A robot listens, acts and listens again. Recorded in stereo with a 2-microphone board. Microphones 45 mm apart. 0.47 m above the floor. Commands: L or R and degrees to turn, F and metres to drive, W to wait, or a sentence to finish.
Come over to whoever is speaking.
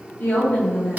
L55
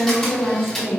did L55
L65
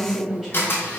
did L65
R10
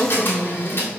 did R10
F1.0
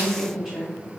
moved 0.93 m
F1.0
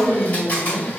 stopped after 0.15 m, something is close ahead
R10
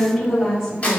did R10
Arrived at the woman speaking, straight ahead.